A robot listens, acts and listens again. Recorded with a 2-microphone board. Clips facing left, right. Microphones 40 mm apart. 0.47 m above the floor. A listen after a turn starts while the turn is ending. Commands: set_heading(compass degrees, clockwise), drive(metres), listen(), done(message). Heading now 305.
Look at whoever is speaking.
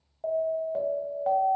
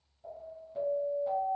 listen()
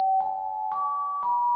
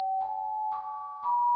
listen()
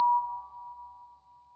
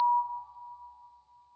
done("I can't make out anyone speaking to turn to.")